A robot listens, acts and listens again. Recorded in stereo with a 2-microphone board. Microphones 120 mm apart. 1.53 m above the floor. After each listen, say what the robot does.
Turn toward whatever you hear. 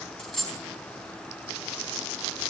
Turn 30° left.
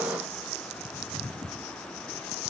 Keep listening.
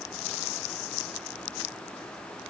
I heard a dropped coin, but can't make it out now. It was about 25° right or 145° left.